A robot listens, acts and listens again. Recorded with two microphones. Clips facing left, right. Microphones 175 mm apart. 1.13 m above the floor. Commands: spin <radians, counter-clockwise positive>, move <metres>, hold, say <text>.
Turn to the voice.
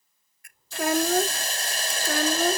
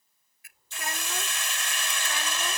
spin 1.22
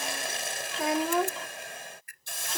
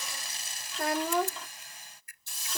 say Facing the child speaking.